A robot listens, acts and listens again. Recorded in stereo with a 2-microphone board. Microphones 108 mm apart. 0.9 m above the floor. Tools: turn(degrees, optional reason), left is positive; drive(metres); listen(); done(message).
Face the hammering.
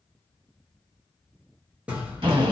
turn(degrees=-30)
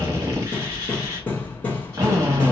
turn(degrees=20, reason="So it is at 20° left.")
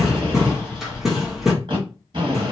done("Found it: hammering, straight ahead, under 1 m away.")